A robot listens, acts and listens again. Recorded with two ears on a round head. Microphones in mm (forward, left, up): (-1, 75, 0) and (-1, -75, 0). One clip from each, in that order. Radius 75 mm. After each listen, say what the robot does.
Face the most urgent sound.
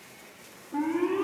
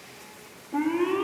Turn 65° right.
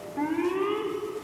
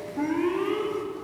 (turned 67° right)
Found it: an alarm, straight ahead, 2 to 4 m away.